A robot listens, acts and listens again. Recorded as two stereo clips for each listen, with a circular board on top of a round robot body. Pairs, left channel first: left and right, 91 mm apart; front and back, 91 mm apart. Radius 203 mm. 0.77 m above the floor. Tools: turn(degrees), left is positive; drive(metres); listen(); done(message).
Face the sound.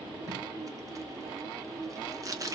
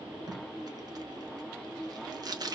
turn(degrees=-140)
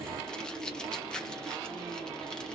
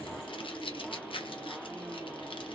turn(degrees=10)
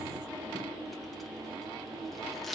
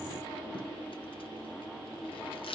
listen()
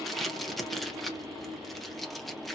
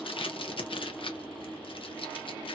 done("Found it: tape being pulled, straight ahead.")